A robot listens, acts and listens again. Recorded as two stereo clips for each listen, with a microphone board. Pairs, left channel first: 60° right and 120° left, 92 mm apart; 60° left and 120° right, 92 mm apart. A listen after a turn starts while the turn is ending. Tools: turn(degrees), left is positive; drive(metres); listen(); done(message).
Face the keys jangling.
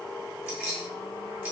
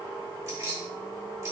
turn(degrees=-165)
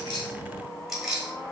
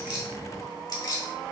turn(degrees=45)
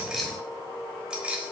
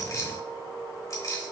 turn(degrees=60)
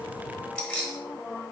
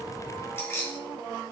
turn(degrees=15)
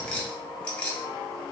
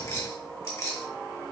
turn(degrees=15)
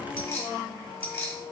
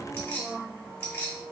done("Found it: keys jangling, straight ahead.")